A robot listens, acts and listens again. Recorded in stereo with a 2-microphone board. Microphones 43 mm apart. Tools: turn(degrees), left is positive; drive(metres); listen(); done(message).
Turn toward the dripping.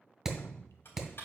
turn(degrees=70)
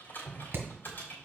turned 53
turn(degrees=20)
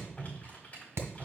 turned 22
done("Facing the dripping, under 1 m away.")